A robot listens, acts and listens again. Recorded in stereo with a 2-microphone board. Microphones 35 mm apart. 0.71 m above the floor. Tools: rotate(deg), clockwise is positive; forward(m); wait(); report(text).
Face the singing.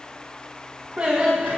rotate(35)
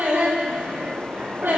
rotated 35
rotate(100)
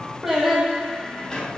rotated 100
report("Found it: singing, straight ahead.")